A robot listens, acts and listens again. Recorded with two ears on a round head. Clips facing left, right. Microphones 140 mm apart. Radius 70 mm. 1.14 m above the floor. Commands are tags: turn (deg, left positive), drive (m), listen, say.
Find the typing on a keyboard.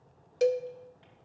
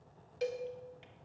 <listen/>
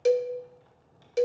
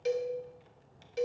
<listen/>
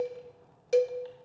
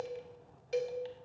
<say>I can't make out typing on a keyboard to turn to.</say>